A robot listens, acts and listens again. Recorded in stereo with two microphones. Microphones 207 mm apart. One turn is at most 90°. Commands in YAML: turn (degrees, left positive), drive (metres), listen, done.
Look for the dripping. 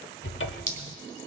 turn: -50
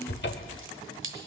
turn: -80
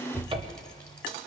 listen: true
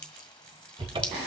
listen: true
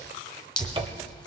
done: "Found it: dripping, straight ahead."